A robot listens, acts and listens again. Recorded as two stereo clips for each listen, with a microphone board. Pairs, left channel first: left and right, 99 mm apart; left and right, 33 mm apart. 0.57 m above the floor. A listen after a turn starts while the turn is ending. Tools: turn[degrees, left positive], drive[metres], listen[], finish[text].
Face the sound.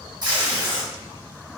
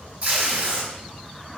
Thought: The tape being pulled: about 40° right or 140° right.
Action: turn[-40]
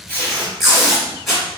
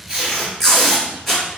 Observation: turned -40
Action: finish[Found it: tape being pulled, straight ahead.]